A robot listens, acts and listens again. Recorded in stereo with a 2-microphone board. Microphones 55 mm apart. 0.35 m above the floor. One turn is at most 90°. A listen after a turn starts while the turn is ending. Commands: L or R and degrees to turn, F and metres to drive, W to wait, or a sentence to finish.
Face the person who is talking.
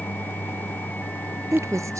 R70
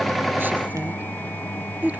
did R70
R35
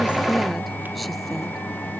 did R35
W
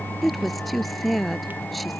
Facing the woman speaking.